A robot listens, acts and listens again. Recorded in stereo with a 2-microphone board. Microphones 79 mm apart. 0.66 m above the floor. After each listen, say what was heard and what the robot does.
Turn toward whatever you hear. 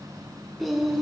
Turn 30° right.
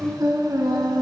So it is at 115° right. Turn 115° right.
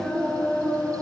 The singing is now 20° left. Turn 20° left.
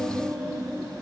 The singing is now 15° left. Turn 15° left.
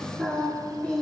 The singing is now 15° left. Turn 15° left.
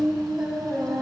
Facing the singing, 2 to 4 m away.